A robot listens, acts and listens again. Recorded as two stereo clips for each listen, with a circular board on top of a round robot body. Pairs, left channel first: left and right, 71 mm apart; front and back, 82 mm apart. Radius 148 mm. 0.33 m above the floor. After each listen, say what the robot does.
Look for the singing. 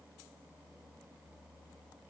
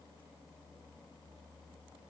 Keep listening.
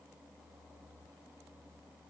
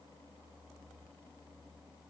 Keep listening.
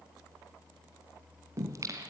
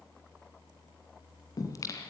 Turn 50° right.
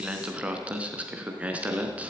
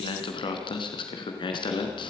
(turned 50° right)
Turn 20° right.
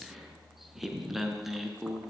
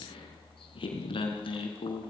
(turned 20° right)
Found it: singing, straight ahead.